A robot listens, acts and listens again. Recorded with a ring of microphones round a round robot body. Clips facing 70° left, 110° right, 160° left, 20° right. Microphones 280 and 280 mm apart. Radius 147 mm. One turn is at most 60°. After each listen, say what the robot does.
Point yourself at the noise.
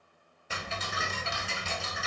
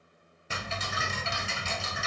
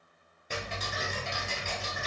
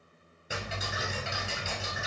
Turn 60° right.
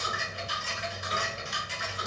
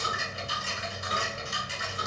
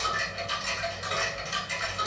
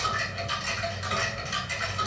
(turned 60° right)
Turn 45° right.
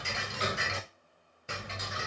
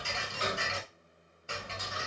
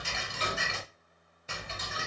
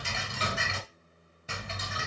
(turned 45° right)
Found it: ticking, straight ahead, under 1 m away.